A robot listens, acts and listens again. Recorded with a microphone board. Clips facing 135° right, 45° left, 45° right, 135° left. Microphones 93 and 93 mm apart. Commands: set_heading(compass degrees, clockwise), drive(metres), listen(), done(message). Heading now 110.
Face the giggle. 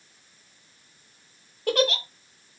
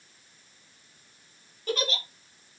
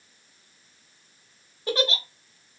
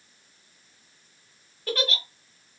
set_heading(225)
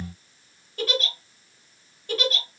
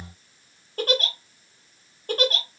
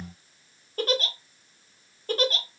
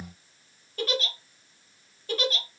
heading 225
done("Facing the giggle, under 1 m away.")